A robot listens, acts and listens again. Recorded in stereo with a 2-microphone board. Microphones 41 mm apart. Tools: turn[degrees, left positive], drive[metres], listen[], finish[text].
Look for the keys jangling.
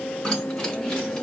Thought: The keys jangling: about 20° left or 160° left.
Action: turn[20]
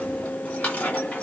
Thought: So it is at 135° left.
Action: turn[135]
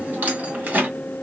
Thought: The keys jangling is now 45° right.
Action: turn[-45]
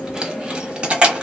Thought: The keys jangling is now 30° right.
Action: turn[-30]
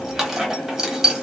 Thought: The keys jangling is now 10° right.
Action: turn[-10]
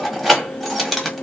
Action: finish[Facing the keys jangling, 1 to 2 m away.]